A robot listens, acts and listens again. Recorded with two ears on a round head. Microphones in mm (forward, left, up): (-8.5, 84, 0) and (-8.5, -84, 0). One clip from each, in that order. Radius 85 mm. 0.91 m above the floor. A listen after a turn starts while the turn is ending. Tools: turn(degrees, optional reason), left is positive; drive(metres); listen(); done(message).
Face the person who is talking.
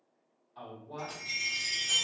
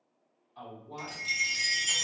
turn(degrees=30)
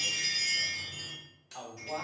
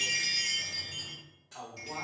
turn(degrees=150, reason="So it is at 150° left.")
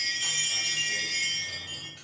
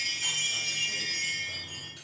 listen()
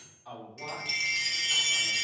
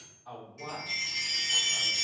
turn(degrees=40, reason="The man speaking is now 40° left.")
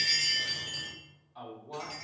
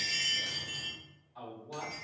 turn(degrees=10, reason="The man speaking is now 10° left.")
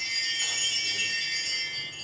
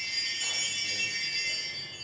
listen()
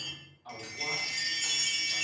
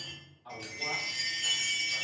done("Facing the man speaking.")